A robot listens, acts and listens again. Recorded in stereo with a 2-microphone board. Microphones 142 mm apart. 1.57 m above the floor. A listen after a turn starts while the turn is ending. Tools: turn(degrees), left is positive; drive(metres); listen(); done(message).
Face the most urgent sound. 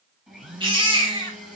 turn(degrees=-40)
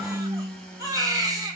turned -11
turn(degrees=-30)
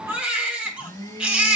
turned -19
turn(degrees=-10)
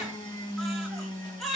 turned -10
done("Facing the baby crying, 2 to 4 m away.")